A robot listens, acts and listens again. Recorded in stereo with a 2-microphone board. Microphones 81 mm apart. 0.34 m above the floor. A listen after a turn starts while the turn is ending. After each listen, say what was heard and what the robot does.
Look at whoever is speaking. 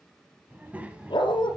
The child speaking: about 15° right or 165° right. Turn 15° right.
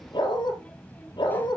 So it is at 20° left. Turn 20° left.
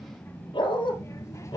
The child speaking is now 40° left. Turn 40° left.
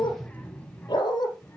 The child speaking is now 25° left. Turn 25° left.
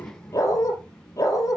The child speaking is now 15° left. Turn 15° left.
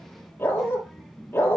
Facing the child speaking, 2 to 4 m away.